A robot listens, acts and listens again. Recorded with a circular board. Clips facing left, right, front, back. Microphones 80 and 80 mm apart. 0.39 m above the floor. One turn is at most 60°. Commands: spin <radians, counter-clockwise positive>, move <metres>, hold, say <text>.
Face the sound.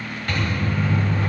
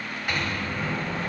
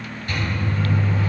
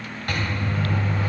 spin -1.05
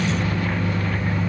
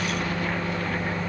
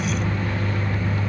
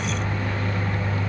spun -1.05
spin -1.05
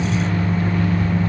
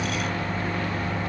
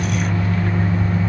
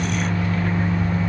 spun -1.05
spin -1.05
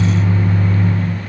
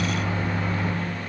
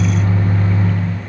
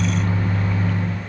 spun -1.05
spin -0.44
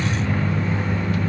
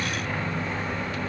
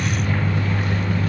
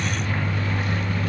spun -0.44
say Facing the microwave, 1 to 2 m away.